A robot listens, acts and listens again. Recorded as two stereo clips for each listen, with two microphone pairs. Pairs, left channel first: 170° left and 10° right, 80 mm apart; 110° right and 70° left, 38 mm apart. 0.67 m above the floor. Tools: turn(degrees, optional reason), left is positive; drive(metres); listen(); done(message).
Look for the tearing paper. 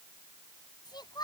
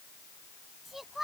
listen()
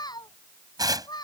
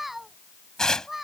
turn(degrees=-40, reason="The tearing paper: 40° right.")
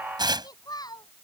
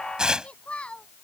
done("Facing the tearing paper.")